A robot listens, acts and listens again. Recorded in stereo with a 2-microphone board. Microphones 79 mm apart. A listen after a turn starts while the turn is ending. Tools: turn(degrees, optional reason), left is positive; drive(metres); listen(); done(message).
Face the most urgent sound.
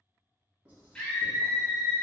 turn(degrees=30)
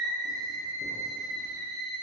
turn(degrees=140, reason="So it is at 140° left.")
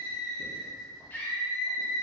turn(degrees=25, reason="The scream is now 25° left.")
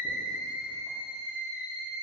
turn(degrees=-20, reason="The scream is now 20° right.")
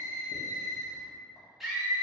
done("Found it: a scream, straight ahead.")